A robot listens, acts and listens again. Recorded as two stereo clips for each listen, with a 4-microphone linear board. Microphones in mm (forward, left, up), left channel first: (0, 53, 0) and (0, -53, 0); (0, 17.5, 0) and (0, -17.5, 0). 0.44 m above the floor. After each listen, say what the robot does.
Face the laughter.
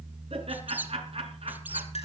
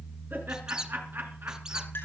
Turn 70° right.
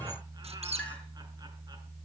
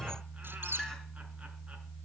Keep listening.
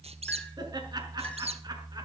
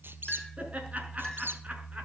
Keep listening.
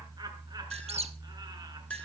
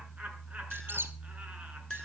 I heard laughter, but can't make it out now. It was about straight ahead or 40° right.